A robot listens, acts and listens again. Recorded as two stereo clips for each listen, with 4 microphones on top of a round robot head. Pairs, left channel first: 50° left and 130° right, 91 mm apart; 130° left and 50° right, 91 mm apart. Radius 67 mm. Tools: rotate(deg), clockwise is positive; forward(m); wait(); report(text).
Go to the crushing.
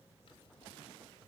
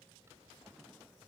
wait()
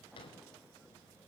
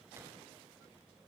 wait()
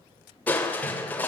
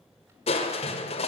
rotate(-125)
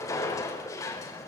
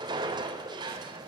forward(1.0)
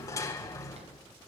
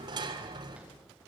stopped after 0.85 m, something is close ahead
report("Blocked. The crushing is further on, straight ahead.")